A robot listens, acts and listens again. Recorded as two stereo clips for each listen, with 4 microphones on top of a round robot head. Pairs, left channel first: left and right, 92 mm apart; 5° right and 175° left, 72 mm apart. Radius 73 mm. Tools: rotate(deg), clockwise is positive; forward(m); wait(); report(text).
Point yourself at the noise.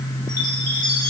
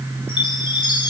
rotate(-10)
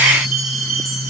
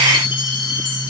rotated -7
report("Facing the chime.")